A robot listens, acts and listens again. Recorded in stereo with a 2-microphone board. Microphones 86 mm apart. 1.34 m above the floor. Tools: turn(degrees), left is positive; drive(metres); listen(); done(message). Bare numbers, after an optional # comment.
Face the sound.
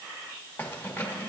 # The keys jangling: about 25° left or 155° left.
turn(25)
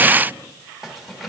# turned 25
listen()
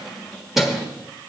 done("Facing the keys jangling, 1 to 2 m away.")